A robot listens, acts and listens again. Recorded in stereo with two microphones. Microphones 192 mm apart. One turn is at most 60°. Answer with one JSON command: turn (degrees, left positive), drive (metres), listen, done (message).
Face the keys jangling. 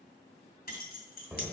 {"turn": 50}
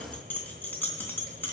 {"turn": 10}
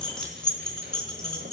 {"done": "Found it: keys jangling, straight ahead, 2 to 4 m away."}